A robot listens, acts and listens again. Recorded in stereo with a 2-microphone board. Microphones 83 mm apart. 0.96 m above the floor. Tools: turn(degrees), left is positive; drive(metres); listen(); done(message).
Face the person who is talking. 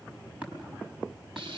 listen()
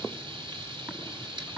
listen()
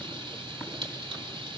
done("I can't make out anyone speaking to turn to.")